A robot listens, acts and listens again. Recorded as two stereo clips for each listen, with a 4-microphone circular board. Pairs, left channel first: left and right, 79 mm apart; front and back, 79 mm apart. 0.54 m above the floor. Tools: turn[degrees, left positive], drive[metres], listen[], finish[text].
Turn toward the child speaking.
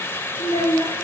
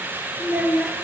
Thought: The child speaking: 100° left.
Action: turn[100]
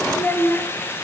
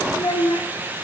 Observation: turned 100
Thought: The child speaking is now 25° left.
Action: turn[25]
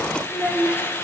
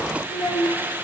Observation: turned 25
Action: finish[Facing the child speaking, over 4 m away.]